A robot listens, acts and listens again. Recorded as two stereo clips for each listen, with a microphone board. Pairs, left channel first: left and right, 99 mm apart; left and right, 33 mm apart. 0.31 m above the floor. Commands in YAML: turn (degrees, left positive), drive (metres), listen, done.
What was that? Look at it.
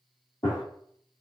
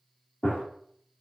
turn: 50
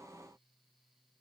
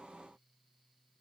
listen: true
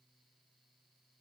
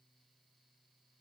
done: "I heard a gunshot, but can't make it out now. It was about straight ahead or 80° left."